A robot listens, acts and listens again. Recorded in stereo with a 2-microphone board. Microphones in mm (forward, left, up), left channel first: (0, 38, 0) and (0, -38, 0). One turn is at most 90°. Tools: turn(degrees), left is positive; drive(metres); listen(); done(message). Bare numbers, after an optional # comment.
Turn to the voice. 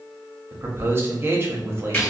# The man speaking: about 30° right or 150° right.
turn(-30)
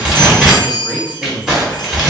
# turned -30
# So it is at 10° right.
turn(-10)
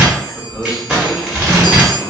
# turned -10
done("Found it: a man speaking, straight ahead, under 1 m away.")